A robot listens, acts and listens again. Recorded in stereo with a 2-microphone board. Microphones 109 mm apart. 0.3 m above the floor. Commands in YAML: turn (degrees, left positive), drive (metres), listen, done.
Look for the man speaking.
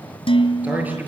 turn: -20
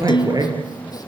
turn: -140
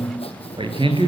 turn: -55
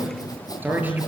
turn: -15
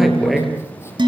done: "Facing the man speaking, over 4 m away."